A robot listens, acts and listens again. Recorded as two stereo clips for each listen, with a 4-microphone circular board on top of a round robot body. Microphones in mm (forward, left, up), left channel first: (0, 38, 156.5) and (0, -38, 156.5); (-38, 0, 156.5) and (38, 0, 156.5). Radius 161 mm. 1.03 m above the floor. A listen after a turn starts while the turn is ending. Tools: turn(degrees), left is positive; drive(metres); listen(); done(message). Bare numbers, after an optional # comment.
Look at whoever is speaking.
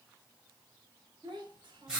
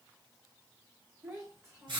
# The child speaking: 50° right.
turn(-50)
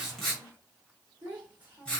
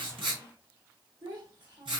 # The child speaking is now 20° right.
turn(-20)
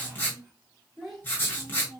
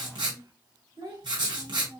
done("Found it: a child speaking, straight ahead.")